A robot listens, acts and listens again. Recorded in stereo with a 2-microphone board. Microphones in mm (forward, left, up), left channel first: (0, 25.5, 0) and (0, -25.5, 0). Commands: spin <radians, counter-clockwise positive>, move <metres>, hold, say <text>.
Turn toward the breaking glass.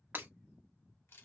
spin -0.70
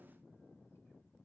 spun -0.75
hold
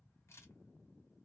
say I heard breaking glass, but can't make it out now. It was about 5° left or 95° right.